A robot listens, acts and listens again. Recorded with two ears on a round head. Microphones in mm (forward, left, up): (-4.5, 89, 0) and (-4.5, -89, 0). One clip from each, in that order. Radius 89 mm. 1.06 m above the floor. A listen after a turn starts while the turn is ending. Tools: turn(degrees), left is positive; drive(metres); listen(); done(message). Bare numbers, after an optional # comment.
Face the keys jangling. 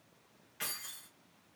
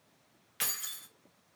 turn(-90)
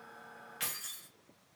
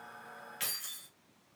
# So it is at 10° right.
turn(-10)
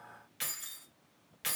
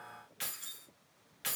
done("Facing the keys jangling.")